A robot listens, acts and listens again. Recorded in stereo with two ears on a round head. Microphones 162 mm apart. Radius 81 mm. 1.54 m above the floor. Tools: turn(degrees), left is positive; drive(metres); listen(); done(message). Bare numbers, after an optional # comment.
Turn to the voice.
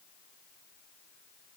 listen()
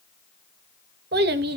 # The child speaking: about 60° right or 120° right.
turn(-60)
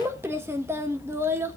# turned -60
# So it is at 15° right.
turn(-15)
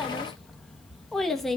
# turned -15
done("Facing the child speaking.")